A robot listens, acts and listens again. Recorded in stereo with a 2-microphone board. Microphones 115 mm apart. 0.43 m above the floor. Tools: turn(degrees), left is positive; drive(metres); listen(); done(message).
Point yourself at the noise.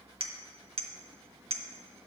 turn(degrees=-55)
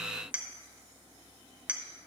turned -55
turn(degrees=-15)
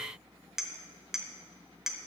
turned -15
done("Found it: a clink, straight ahead.")